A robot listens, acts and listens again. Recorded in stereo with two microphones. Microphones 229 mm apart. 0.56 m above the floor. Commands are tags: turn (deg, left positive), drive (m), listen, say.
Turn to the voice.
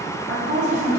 <turn deg="-50"/>
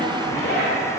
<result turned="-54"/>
<listen/>
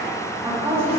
<turn deg="-15"/>
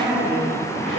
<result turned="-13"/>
<say>Found it: a woman speaking, straight ahead.</say>